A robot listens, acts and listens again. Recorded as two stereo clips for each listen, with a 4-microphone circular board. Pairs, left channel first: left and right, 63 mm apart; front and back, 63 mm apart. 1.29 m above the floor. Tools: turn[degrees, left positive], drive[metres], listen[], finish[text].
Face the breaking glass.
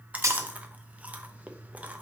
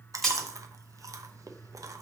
Thought: The breaking glass: 80° right.
Action: turn[-80]
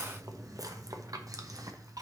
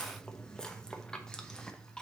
Action: finish[I heard breaking glass from this way, but can't make it out now.]